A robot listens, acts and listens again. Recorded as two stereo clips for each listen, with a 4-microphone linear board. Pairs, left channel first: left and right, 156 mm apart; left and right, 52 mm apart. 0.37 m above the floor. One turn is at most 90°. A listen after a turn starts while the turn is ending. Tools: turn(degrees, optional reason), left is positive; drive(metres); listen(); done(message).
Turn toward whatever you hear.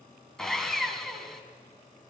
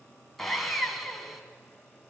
turn(degrees=30)
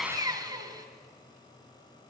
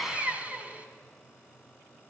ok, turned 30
turn(degrees=-30, reason="So it is at 30° right.")
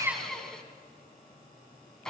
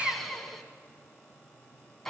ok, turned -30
done("Found it: sawing, straight ahead, 2 to 4 m away.")